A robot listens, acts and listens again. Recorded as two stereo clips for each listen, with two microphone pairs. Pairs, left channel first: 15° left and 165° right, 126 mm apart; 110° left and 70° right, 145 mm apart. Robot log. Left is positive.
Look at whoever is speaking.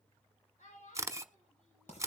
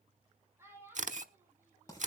end: Found it: a child speaking, straight ahead, over 4 m away.